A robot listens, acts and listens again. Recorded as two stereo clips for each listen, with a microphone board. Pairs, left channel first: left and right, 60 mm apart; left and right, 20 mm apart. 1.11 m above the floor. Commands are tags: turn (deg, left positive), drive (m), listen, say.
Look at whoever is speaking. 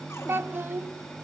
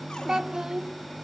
<turn deg="-35"/>
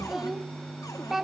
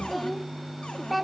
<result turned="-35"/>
<say>Facing the child speaking.</say>